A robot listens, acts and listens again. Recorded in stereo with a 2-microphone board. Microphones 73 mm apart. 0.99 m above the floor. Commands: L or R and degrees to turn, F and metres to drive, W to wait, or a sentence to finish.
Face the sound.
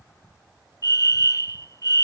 L50
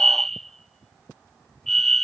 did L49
Found it: a fire alarm, straight ahead.